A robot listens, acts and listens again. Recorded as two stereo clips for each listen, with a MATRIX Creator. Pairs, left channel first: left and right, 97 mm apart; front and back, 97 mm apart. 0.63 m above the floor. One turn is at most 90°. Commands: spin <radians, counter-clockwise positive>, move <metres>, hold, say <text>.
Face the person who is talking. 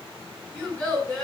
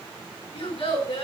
say Facing the child speaking.